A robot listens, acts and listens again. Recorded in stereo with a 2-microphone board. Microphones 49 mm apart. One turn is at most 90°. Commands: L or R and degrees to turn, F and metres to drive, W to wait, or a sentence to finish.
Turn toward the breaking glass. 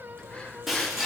R30
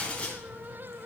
L30
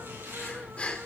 Facing where the breaking glass came from. I can't hear it now.